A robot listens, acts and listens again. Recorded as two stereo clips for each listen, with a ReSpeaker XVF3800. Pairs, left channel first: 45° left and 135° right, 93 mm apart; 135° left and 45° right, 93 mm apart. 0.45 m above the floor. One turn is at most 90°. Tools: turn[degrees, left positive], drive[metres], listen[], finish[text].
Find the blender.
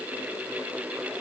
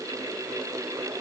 Action: listen[]
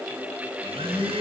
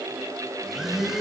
Thought: The blender: 130° right.
Action: turn[-90]
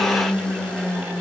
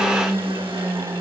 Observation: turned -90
Thought: The blender is now 35° right.
Action: turn[-35]
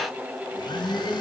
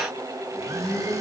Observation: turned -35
Thought: The blender is now 10° left.
Action: turn[10]
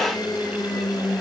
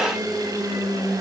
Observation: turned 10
Action: finish[Found it: a blender, straight ahead.]